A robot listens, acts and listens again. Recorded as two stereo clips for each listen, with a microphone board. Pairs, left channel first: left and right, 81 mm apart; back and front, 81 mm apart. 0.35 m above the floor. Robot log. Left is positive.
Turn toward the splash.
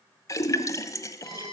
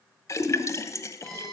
note: The splash: 130° left.
cmd yaw +130
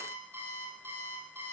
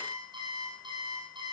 end: I heard a splash from this way, but can't make it out now.